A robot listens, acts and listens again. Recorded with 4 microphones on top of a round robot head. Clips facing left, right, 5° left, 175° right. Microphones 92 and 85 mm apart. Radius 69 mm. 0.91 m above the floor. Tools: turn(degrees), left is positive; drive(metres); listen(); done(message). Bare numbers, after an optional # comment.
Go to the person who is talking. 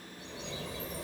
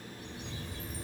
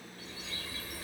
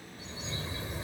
listen()
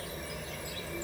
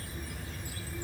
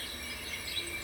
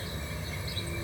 listen()
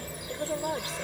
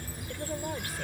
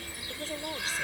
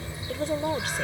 # The woman speaking: 160° left.
turn(160)
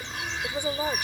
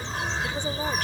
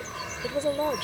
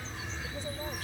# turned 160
# The woman speaking is now 10° left.
turn(10)
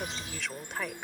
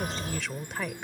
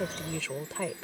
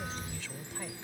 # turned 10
drive(1.0)
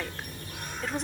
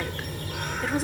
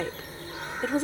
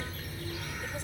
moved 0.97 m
drive(1.0)
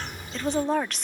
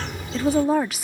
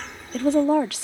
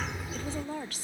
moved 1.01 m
drive(1.0)
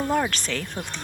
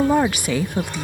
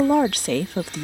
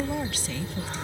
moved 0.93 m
# The woman speaking is now 10° right.
turn(-10)
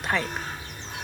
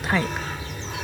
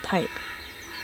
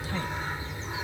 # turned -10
drive(1.0)
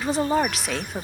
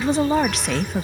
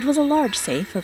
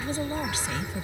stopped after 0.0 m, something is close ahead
done("Arrived at the woman speaking, straight ahead.")